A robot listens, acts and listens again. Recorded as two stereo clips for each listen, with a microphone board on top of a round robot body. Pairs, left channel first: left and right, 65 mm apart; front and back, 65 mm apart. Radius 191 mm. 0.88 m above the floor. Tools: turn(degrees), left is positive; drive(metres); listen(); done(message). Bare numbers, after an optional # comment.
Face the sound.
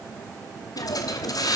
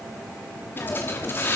# The hiss: 60° left.
turn(60)
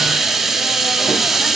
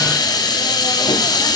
done("Facing the hiss.")